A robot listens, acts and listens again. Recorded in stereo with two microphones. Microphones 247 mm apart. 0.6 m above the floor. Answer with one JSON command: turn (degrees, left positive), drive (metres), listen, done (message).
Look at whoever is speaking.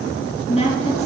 {"turn": 25}
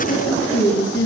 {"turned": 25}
{"turn": 130}
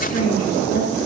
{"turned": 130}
{"turn": 35}
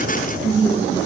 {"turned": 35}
{"turn": -10}
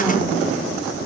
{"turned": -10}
{"listen": true}
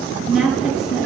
{"done": "Found it: a woman speaking, straight ahead."}